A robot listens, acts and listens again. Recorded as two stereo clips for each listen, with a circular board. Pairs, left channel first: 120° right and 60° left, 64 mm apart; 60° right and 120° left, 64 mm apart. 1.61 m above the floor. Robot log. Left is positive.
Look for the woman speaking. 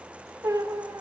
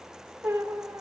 cmd idle
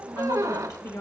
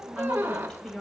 note: The woman speaking: 135° right.
cmd yaw -135
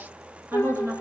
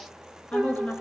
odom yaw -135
note: The woman speaking is now 15° left.
cmd yaw +15
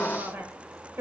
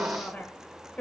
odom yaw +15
note: The woman speaking is now 10° left.
cmd yaw +10
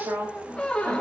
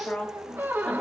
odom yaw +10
note: The woman speaking is now 15° left.
cmd yaw +15
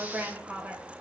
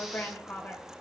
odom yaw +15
end: Facing the woman speaking.